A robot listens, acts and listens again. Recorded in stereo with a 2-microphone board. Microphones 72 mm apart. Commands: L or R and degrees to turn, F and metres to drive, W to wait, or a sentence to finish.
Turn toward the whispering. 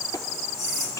L40
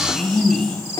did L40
Facing the whispering, over 4 m away.